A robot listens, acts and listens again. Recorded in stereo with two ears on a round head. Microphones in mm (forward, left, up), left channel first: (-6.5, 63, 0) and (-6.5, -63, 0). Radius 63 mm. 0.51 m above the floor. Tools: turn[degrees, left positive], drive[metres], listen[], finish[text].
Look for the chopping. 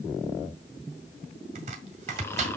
Thought: The chopping: about 55° right or 125° right.
Action: turn[-55]
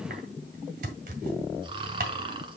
Thought: So it is at 70° right.
Action: turn[-70]
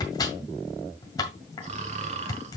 Thought: The chopping is now 25° left.
Action: turn[25]
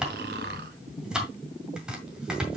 Action: finish[Facing the chopping.]